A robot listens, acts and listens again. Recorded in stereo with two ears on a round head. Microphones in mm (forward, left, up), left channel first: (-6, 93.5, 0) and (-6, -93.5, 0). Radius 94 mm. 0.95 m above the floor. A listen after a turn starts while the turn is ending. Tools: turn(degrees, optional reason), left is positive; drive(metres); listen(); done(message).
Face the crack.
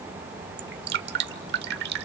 listen()
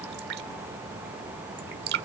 listen()
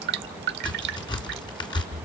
turn(degrees=20, reason="The crack: about 20° left or 160° left.")
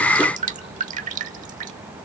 listen()
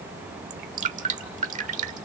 done("I heard a crack, but can't make it out now. It was about straight ahead or 140° left.")